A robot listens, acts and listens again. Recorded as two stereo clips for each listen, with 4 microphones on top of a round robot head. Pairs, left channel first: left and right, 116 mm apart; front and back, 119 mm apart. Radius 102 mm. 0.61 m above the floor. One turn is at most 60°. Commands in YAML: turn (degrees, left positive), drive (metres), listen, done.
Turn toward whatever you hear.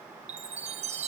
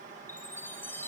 turn: -60
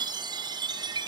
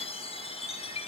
turn: -40
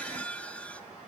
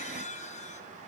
turn: 10
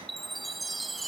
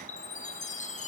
done: "Facing the chime."